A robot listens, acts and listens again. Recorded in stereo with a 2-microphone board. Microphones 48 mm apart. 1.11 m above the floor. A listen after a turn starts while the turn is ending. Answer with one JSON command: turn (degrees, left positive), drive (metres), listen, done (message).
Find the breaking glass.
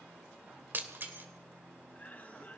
{"turn": -45}
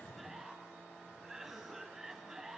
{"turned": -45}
{"listen": true}
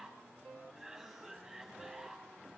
{"done": "I heard breaking glass, but can't make it out now. It was about straight ahead or 90° right."}